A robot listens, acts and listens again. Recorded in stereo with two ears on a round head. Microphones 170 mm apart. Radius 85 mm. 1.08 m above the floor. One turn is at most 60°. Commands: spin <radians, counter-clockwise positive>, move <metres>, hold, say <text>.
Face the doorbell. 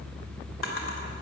hold
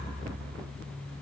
hold
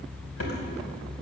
say I can't make out a doorbell, only a drawer.